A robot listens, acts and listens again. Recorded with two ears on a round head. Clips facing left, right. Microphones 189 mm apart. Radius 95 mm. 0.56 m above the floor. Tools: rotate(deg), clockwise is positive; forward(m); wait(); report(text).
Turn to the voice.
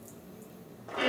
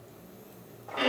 wait()
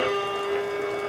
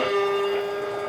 wait()
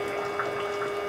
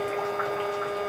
report("I can't make out anyone speaking to turn to.")